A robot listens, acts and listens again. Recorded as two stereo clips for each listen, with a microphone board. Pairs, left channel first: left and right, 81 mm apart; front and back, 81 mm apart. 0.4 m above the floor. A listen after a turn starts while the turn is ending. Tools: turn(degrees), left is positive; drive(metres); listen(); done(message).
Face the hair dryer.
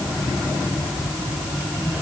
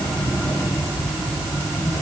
listen()
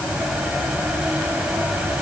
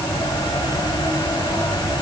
listen()
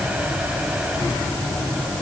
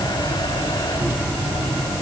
done("I can't make out a hair dryer.")